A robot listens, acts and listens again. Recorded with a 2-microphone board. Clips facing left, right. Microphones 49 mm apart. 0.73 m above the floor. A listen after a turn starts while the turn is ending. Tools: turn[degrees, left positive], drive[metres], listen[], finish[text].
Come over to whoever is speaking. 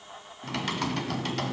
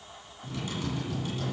Action: listen[]
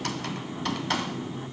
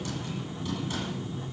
Action: listen[]
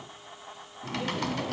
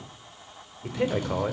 Thought: The man speaking: about 70° right or 110° right.
Action: turn[-70]
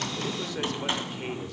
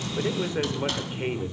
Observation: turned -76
Thought: So it is at 25° right.
Action: turn[-25]
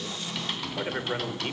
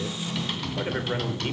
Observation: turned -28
Action: drive[1.0]
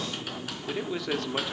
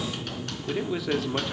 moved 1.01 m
Action: drive[1.0]
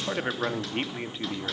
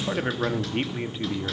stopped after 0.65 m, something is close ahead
Action: finish[Arrived at the man speaking, straight ahead.]